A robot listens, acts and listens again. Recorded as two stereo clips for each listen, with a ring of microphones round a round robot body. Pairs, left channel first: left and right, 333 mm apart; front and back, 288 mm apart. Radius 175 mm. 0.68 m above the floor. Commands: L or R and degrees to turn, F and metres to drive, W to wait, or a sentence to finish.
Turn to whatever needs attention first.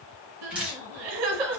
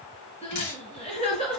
R70
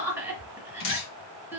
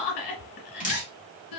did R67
Facing the crying, 1 to 2 m away.